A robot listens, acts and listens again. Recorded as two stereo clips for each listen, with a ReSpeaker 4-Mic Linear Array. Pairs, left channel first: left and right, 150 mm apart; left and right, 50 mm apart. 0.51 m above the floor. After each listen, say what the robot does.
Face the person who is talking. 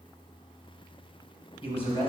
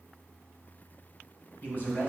Turn 40° left.
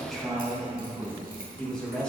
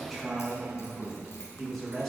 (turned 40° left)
Found it: a man speaking, straight ahead.